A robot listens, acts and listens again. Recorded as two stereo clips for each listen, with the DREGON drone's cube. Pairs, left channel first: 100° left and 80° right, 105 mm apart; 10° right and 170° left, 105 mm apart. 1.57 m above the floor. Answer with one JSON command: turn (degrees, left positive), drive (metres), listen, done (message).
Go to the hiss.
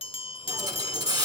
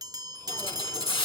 {"turn": -35}
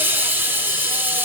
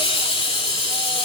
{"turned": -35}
{"turn": -10}
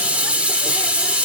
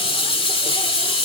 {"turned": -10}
{"drive": 1.0}
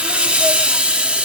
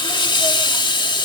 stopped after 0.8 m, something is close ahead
{"done": "Arrived at the hiss, straight ahead."}